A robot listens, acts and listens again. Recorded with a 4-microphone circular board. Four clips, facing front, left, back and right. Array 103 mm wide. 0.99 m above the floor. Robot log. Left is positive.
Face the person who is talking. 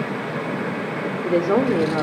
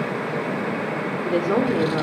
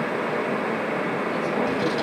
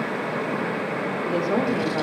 note: The woman speaking: 25° left.
cmd yaw +25
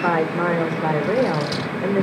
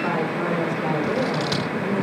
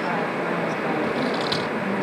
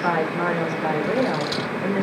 note: The woman speaking is now 15° right.
cmd yaw -15
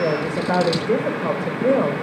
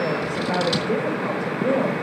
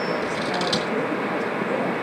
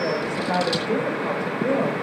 end: Found it: a woman speaking, straight ahead.